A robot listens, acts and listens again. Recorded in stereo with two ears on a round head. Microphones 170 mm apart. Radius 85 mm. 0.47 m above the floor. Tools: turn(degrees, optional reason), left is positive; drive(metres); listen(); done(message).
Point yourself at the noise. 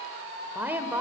turn(degrees=-30)
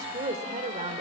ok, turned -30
turn(degrees=-135, reason="So it is at 135° right.")
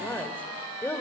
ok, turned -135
turn(degrees=15, reason="The woman speaking is now 15° left.")
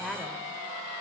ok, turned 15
done("Found it: a woman speaking, straight ahead.")